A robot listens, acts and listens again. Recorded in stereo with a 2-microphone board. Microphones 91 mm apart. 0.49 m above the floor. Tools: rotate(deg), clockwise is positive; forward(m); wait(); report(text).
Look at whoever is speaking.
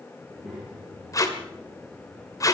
rotate(30)
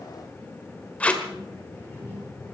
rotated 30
rotate(-20)
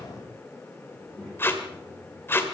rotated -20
rotate(-10)
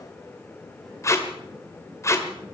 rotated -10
wait()
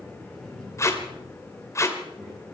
report("Found it: a child speaking, straight ahead.")